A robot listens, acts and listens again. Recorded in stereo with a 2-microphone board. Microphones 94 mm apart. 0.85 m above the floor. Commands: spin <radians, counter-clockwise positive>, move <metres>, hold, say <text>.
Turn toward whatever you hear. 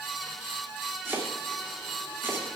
spin -0.44
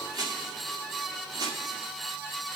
spin -2.27
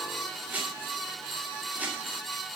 spin -0.35
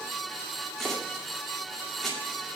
say Facing the chopping, 2 to 4 m away.